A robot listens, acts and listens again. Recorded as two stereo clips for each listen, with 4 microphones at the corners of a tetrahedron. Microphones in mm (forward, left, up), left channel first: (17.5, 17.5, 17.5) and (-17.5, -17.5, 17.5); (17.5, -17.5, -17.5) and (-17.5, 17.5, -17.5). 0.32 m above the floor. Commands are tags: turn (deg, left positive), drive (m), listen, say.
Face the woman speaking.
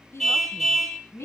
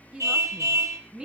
<turn deg="65"/>
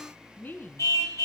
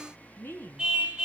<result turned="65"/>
<say>Found it: a woman speaking, straight ahead, 2 to 4 m away.</say>